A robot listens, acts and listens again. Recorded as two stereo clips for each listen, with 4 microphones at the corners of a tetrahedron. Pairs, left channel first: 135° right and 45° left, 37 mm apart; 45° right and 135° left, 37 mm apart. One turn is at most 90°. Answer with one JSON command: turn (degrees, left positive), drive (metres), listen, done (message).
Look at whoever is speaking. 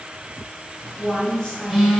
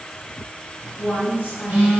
{"turn": -65}
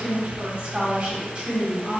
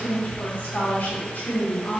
{"done": "Found it: a woman speaking, straight ahead."}